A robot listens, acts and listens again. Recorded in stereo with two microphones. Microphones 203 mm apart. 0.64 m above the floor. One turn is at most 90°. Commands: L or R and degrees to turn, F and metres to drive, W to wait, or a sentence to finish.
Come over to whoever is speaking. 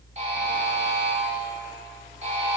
W
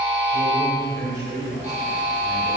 R55
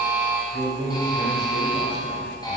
R65
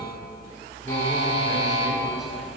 W
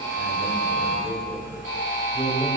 F1.0
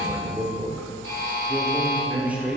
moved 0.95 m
R10
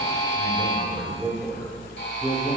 F1.0
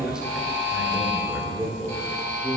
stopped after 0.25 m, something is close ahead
Arrived at the man speaking, straight ahead.